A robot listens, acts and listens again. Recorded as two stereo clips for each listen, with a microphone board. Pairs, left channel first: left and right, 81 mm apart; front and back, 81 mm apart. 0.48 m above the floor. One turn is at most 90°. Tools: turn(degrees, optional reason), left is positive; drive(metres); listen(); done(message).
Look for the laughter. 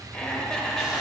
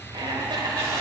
turn(degrees=90, reason="The laughter: 175° left.")
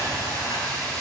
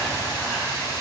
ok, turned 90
turn(degrees=85, reason="Nothing new. It was at 85° left.")
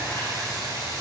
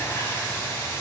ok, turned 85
listen()
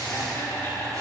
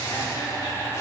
turn(degrees=35, reason="The laughter is now 35° left.")
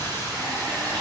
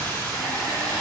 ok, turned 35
listen()
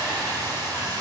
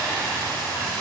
listen()
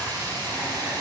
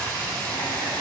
done("I heard laughter from this way, but can't make it out now.")